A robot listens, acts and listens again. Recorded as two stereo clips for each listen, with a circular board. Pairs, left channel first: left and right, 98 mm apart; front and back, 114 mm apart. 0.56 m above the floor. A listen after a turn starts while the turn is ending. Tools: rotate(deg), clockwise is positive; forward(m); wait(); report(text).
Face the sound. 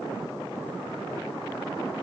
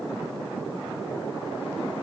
wait()
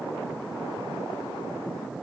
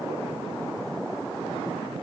wait()
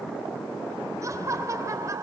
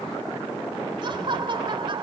rotate(145)
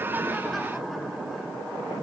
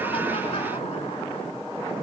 wait()
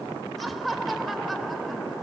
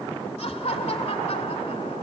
report("Facing the laughter.")